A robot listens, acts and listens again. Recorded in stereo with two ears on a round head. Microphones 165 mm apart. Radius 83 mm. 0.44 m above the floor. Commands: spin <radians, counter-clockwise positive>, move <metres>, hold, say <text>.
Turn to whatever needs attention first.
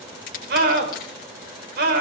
spin -1.05
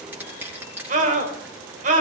spin -0.87
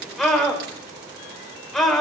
say Found it: a scream, straight ahead.